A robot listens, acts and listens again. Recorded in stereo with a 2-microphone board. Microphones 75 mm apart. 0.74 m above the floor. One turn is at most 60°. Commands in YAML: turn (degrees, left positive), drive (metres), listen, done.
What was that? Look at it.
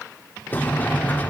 turn: 25
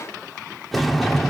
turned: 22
done: "Facing the sliding door, 1 to 2 m away."